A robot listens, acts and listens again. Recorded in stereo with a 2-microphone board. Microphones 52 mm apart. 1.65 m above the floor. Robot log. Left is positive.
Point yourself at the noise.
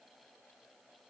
cmd idle
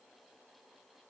cmd idle
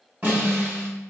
note: The snare drum: about 40° right or 140° right.
cmd yaw -40
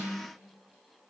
cmd idle
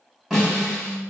note: So it is at 10° right.
cmd yaw -10
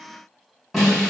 end: Facing the snare drum.